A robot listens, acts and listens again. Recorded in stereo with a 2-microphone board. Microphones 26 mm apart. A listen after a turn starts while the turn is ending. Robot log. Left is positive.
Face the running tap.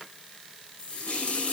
note: The running tap: about 50° left or 130° left.
cmd yaw +50
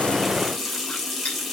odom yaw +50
end: Found it: a running tap, straight ahead.